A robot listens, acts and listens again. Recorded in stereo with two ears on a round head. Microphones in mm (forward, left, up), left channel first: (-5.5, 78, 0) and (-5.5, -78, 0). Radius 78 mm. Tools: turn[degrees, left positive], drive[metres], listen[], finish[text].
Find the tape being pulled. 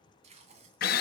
Thought: The tape being pulled: about 40° right or 140° right.
Action: turn[-40]
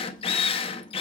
Action: listen[]
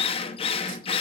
Action: listen[]
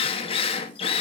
Action: finish[I heard tape being pulled, but can't make it out now. It was about straight ahead or 100° right.]